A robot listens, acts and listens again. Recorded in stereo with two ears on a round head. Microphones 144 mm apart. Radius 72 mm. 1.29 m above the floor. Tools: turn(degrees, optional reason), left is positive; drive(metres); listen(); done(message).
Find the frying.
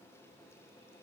listen()
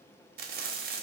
turn(degrees=-60, reason="The frying: about 60° right or 120° right.")
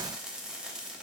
done("Found it: frying, straight ahead.")